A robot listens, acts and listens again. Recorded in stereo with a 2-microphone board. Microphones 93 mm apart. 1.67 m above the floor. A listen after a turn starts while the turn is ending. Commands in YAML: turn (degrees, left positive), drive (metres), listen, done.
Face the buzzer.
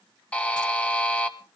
turn: 30
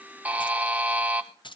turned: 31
turn: -15
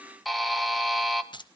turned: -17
done: "Facing the buzzer."